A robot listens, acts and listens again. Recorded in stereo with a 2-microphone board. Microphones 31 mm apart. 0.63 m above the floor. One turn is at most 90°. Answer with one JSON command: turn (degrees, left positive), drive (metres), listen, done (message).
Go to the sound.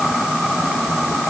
{"listen": true}
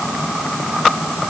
{"listen": true}
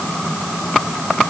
{"done": "I can't make out anything."}